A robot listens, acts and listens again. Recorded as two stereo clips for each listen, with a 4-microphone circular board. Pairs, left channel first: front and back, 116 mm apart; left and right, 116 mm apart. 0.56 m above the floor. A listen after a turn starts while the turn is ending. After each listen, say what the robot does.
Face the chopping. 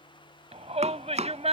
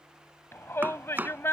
Turn 165° right.
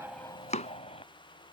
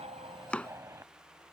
Turn 10° left.
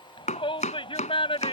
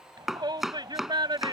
Facing the chopping.